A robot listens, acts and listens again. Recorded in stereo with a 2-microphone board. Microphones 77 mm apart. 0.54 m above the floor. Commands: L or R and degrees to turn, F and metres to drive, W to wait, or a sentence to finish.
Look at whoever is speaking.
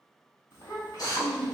L30
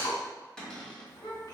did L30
L120
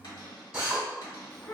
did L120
L25
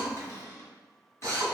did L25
W
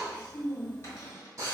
R15
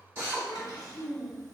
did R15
Found it: a child speaking, straight ahead, 1 to 2 m away.